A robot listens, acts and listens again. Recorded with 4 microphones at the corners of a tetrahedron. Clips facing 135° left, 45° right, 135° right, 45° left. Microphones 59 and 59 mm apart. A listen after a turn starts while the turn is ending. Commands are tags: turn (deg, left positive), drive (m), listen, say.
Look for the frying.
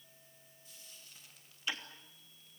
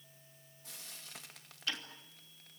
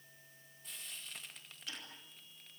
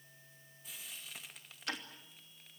<turn deg="-40"/>
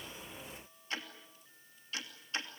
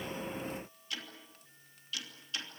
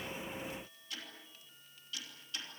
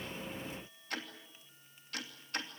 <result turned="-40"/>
<listen/>
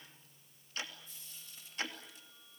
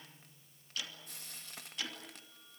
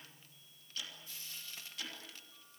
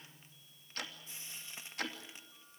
<turn deg="-20"/>
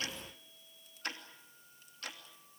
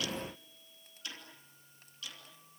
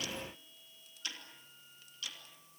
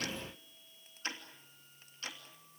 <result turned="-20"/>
<listen/>
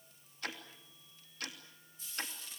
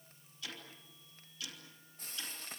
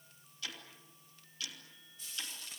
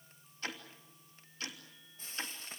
<say>Found it: frying, straight ahead.</say>